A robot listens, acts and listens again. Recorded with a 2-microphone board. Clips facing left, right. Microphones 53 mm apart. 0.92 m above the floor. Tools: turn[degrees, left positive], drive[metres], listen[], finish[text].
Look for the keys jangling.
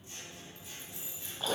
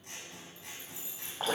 Action: turn[90]
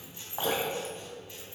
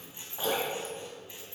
Action: listen[]
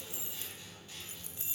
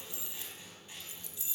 Thought: The keys jangling is now 40° left.
Action: turn[40]
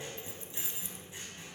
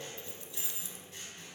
Thought: The keys jangling is now 35° left.
Action: turn[35]
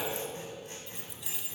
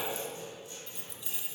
Action: finish[Facing the keys jangling.]